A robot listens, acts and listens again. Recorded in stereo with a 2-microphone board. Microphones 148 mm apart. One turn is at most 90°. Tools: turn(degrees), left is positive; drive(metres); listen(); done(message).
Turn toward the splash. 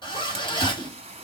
turn(degrees=-40)
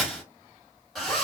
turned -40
listen()
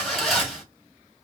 done("I heard a splash, but can't make it out now. It was about straight ahead or 100° right.")